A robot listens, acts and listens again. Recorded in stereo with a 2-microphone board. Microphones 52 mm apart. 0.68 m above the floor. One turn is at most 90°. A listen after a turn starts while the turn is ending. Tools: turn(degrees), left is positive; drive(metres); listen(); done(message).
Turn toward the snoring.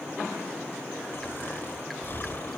turn(degrees=50)
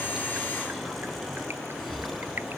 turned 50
done("Found it: snoring, straight ahead.")